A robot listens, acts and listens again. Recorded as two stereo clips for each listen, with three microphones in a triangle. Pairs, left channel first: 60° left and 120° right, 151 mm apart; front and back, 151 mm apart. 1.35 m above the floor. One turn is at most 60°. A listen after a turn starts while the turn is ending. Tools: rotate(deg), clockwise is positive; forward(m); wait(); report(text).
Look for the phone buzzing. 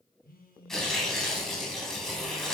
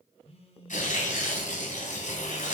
rotate(-50)
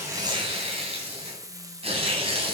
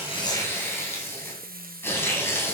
wait()
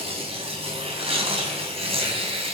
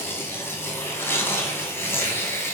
wait()
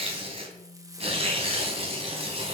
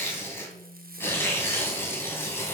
report("Facing the phone buzzing.")